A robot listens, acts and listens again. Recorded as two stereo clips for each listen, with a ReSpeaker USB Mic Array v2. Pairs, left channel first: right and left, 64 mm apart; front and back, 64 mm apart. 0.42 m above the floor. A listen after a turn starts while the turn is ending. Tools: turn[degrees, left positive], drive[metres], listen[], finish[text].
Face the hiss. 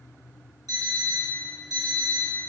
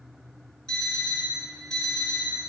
Action: listen[]
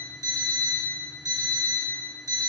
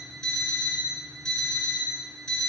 Action: listen[]
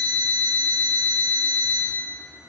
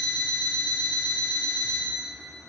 Action: finish[I can't make out a hiss to turn to.]